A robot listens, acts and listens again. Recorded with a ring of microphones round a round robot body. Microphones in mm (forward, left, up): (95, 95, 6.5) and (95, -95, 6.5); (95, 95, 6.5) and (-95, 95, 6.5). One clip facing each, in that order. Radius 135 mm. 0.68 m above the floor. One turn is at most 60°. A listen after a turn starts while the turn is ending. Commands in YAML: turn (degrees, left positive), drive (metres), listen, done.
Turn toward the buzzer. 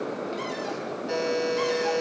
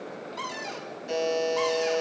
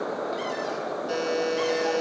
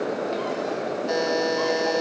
turn: -60
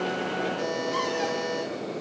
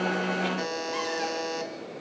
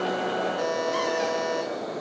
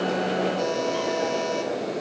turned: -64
turn: -60
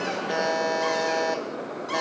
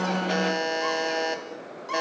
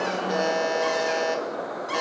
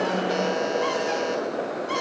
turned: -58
turn: -30
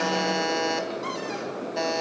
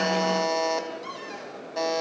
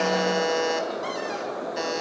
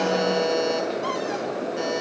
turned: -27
done: "Found it: a buzzer, straight ahead."